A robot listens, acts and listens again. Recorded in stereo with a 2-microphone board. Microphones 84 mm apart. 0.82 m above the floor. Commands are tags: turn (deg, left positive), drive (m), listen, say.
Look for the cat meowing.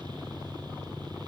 <listen/>
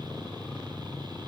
<listen/>
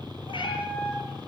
<turn deg="70"/>
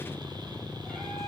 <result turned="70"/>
<listen/>
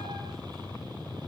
<listen/>
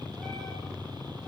<say>I heard a cat meowing, but can't make it out now. It was about straight ahead or 40° left.</say>